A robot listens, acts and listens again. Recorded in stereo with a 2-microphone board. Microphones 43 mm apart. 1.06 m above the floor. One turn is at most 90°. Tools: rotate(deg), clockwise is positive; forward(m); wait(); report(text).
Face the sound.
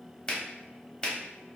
rotate(-25)
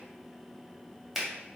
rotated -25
report("Facing the finger snap.")